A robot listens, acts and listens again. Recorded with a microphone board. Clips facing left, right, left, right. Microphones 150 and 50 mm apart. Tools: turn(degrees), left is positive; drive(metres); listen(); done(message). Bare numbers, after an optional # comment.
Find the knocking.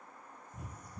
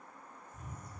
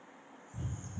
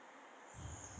listen()
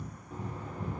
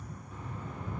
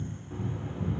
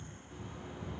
# The knocking: about 40° left or 140° left.
turn(40)
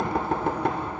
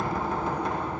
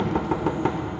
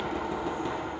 # So it is at 100° left.
turn(100)
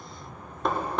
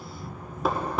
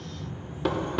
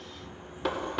done("Facing the knocking, under 1 m away.")